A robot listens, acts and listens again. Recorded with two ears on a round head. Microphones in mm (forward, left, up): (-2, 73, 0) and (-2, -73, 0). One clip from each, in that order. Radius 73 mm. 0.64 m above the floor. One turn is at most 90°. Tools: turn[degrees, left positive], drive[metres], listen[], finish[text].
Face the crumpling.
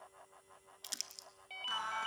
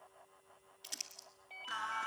Thought: The crumpling: about 35° left or 145° left.
Action: turn[35]
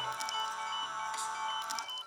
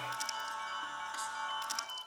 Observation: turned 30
Action: listen[]
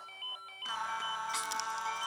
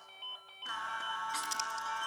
Action: listen[]
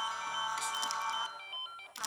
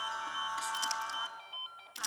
Action: finish[Facing the crumpling.]